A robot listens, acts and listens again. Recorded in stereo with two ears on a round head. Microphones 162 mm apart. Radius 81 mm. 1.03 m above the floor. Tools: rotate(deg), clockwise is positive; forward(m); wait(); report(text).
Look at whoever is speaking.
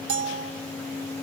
wait()
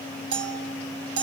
wait()
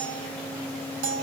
report("I can't make out anyone speaking to turn to.")